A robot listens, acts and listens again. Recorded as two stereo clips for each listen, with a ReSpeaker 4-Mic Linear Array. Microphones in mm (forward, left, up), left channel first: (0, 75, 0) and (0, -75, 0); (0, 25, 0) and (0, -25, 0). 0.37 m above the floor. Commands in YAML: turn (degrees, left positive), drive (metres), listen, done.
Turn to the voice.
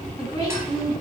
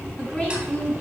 turn: 25
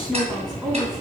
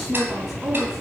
done: "Found it: a woman speaking, straight ahead, 2 to 4 m away."